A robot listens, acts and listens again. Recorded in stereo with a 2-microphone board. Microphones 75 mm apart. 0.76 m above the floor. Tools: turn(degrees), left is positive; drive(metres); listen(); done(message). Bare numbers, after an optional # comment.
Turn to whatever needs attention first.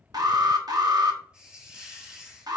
# The alarm: about 60° right or 120° right.
turn(-60)
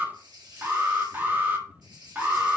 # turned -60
# So it is at 30° right.
turn(-30)
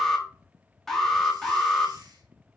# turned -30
done("Found it: an alarm, straight ahead, 1 to 2 m away.")